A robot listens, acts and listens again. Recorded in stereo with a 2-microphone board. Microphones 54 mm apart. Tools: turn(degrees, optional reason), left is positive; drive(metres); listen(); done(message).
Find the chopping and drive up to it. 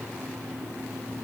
listen()
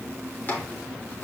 turn(degrees=35, reason="The chopping: about 35° left or 145° left.")
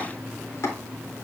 turn(degrees=105, reason="So it is at 105° left.")
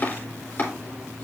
turn(degrees=40, reason="The chopping is now 40° left.")
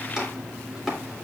drive(metres=1.0)
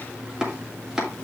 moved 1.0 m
turn(degrees=-15, reason="The chopping is now 15° right.")
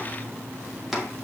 drive(metres=1.0)
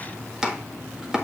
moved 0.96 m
turn(degrees=-15, reason="The chopping is now 15° right.")
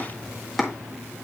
drive(metres=1.0)
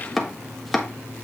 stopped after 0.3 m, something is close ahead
done("Arrived at the chopping, straight ahead.")